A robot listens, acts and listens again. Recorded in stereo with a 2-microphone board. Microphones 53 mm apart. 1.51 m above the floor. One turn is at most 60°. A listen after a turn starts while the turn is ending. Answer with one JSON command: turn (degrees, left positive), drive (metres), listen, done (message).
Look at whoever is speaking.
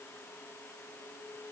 {"listen": true}
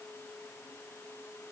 {"listen": true}
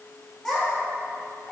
{"turn": 30}
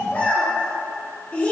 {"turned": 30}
{"turn": 60}
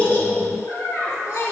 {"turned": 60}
{"turn": 60}
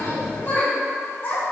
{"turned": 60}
{"turn": 40}
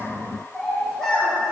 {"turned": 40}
{"done": "Facing the child speaking."}